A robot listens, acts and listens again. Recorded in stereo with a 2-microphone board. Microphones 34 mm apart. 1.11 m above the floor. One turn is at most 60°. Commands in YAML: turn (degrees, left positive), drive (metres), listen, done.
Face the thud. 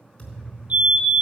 turn: 35
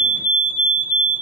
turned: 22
listen: true
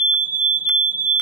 done: "I heard a thud, but can't make it out now. It was about 15° left or 120° left."